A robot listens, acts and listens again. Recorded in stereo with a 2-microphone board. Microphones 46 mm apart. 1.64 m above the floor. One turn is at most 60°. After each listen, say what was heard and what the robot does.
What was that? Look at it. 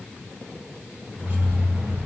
The keys jangling: about 35° right or 145° right. Turn 35° right.
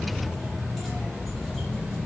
Facing the keys jangling, 2 to 4 m away.